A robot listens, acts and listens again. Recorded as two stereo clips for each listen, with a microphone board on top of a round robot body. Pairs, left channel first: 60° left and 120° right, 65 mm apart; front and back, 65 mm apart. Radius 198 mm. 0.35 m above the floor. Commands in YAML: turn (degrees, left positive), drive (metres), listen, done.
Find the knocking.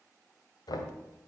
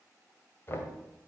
turn: 55
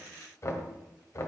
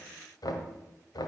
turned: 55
turn: 20
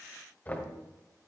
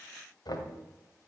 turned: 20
done: "Found it: knocking, straight ahead."